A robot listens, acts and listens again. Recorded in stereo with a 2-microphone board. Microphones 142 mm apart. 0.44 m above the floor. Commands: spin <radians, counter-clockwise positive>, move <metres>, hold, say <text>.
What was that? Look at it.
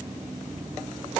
hold
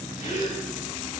spin 1.05
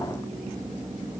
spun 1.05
hold
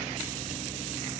say I heard a gasp, but can't make it out now. It was about straight ahead or 60° left.